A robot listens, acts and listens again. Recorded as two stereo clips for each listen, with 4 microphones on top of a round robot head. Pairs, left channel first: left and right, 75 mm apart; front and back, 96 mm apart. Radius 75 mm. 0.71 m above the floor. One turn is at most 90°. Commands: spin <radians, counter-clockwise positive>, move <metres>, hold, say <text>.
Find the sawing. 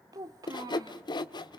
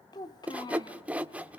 spin 1.57
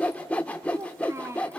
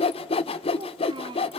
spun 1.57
spin 0.26
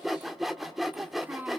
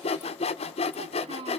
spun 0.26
say Found it: sawing, straight ahead, 1 to 2 m away.